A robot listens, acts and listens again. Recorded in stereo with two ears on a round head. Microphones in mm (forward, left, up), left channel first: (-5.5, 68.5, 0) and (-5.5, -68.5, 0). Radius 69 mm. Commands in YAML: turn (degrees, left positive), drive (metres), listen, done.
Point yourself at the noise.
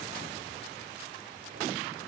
listen: true
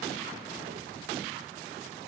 listen: true
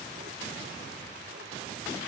done: "I can't make out anything to turn to."